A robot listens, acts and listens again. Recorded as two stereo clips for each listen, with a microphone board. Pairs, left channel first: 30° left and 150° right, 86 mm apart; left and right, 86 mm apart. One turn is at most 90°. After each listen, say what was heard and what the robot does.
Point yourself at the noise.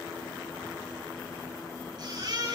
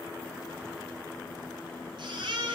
The baby crying: 120° right. Turn 90° right.
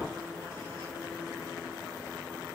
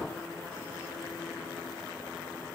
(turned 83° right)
Nothing new. It was at 35° right. Turn 35° right.
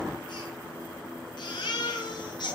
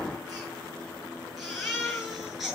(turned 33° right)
Found it: a baby crying, straight ahead, over 4 m away.